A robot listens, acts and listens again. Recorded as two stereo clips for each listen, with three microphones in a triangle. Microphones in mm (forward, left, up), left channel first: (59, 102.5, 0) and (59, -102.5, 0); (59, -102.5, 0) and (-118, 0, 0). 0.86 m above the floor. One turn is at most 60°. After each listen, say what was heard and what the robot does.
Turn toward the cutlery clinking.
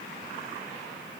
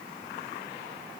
Keep listening.
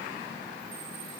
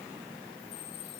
Keep listening.
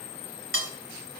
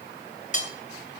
The cutlery clinking: 85° right. Turn 60° right.
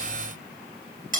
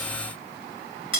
The cutlery clinking is now 40° right. Turn 40° right.
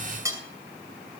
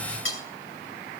The cutlery clinking is now 15° right. Turn 15° right.
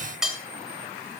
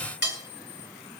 Found it: cutlery clinking, straight ahead, 2 to 4 m away.